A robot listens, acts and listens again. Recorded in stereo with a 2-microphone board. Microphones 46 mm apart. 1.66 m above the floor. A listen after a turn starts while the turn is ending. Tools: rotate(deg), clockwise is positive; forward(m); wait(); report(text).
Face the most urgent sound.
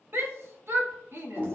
rotate(60)
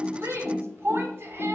rotate(60)
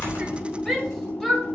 report("Facing the shout, 1 to 2 m away.")